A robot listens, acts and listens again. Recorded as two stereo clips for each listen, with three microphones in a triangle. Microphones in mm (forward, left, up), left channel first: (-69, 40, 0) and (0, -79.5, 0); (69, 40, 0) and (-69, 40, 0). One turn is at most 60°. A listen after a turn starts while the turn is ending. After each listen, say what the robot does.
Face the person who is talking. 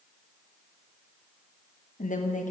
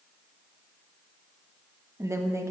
Turn 60° left.
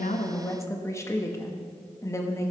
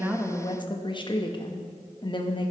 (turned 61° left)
Turn 55° left.
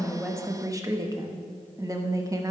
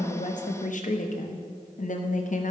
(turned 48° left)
Facing the woman speaking, under 1 m away.